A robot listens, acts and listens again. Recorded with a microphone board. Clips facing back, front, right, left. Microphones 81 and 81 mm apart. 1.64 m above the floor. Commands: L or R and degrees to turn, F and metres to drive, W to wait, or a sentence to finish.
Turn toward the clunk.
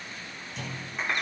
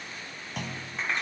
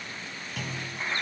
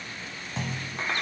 L30
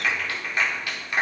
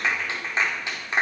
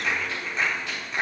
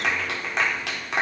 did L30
Facing where the clunk came from. I can't hear it now.